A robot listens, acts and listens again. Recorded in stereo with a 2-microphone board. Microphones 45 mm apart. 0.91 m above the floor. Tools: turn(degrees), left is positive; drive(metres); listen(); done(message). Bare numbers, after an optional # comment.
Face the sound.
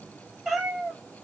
turn(-30)
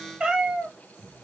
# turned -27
turn(-30)
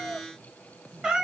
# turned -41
turn(-30)
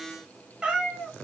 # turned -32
turn(-30)
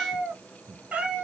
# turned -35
# So it is at 160° right.
turn(-160)
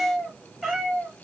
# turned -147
done("Found it: a cat meowing, straight ahead.")